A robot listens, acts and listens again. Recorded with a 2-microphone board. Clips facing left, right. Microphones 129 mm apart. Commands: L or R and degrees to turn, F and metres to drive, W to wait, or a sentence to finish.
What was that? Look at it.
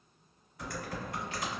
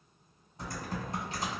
R30
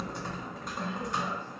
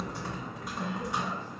Facing the typing on a keyboard, 1 to 2 m away.